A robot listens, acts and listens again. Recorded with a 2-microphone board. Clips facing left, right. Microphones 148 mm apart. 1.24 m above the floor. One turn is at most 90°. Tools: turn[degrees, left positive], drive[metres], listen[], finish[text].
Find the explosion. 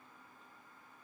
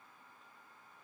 Action: listen[]
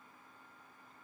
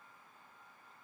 Action: listen[]
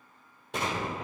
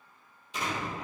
Thought: The explosion: about 75° left or 105° left.
Action: turn[75]
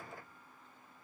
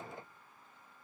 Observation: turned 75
Action: listen[]
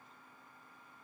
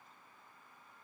Action: finish[I heard an explosion, but can't make it out now. It was about straight ahead or 30° left.]